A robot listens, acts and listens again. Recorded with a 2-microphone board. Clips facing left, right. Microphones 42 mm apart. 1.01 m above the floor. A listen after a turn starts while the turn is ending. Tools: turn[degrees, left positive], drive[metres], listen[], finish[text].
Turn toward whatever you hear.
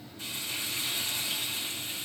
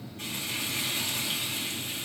Thought: The frying: about 60° right or 120° right.
Action: turn[-60]
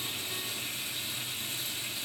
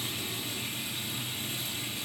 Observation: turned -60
Thought: So it is at 60° right.
Action: turn[-60]
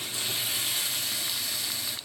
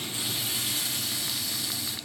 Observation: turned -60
Action: finish[Found it: frying, straight ahead, over 4 m away.]